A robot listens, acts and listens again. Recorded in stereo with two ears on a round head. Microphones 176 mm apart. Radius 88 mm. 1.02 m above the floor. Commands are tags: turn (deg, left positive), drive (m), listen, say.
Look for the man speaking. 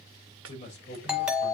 <turn deg="35"/>
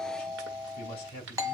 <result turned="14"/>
<turn deg="50"/>
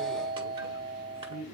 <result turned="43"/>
<turn deg="80"/>
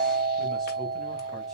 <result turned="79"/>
<listen/>
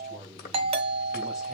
<listen/>
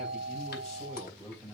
<say>Found it: a man speaking, straight ahead.</say>